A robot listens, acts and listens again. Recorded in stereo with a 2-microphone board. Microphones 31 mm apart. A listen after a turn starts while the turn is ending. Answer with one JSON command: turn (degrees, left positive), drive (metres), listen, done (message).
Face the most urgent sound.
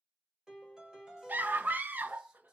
{"turn": -90}
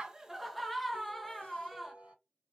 {"done": "Facing the scream."}